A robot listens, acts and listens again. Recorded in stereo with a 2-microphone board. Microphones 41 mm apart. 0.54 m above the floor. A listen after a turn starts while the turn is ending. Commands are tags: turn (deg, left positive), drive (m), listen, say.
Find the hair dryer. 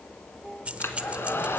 <turn deg="90"/>
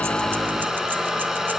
<turn deg="-10"/>
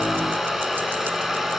<say>Found it: a hair dryer, straight ahead, 1 to 2 m away.</say>